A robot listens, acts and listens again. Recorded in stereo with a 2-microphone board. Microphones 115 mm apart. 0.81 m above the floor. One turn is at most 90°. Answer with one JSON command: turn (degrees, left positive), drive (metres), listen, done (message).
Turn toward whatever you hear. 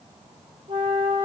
{"turn": -65}
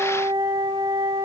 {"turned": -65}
{"turn": -40}
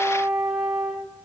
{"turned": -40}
{"done": "Found it: a flute, straight ahead, 2 to 4 m away."}